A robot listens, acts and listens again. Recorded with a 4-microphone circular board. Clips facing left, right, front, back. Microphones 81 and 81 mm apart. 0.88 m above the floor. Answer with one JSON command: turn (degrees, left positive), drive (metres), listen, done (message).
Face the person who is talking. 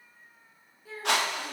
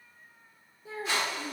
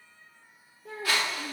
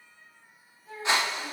{"turn": -25}
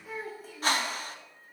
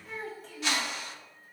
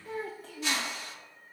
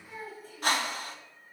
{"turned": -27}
{"done": "Facing the child speaking, under 1 m away."}